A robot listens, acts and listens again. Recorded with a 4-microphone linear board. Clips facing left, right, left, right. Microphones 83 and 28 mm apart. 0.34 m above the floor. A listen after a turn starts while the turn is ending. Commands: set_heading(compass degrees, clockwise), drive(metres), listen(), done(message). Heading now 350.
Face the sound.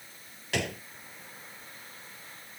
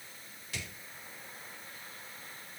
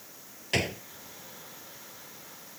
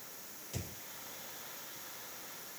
set_heading(260)
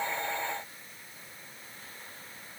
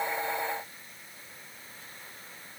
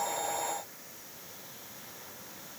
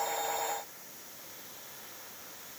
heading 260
done("I heard a gunshot from this way, but can't make it out now.")